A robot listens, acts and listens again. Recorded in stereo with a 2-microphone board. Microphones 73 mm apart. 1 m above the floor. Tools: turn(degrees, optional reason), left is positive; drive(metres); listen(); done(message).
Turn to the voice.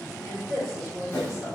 turn(degrees=-45, reason="The woman speaking: about 45° right or 135° right.")
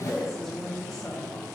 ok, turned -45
done("Found it: a woman speaking, straight ahead.")